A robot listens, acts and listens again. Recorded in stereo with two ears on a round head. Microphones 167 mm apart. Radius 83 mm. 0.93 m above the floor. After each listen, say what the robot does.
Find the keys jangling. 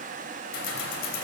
Turn 75° left.
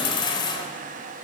Turn 25° left.
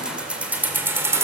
Turn 15° right.
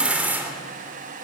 Turn 10° right.
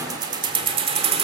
Turn 30° right.
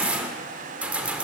Found it: keys jangling, straight ahead.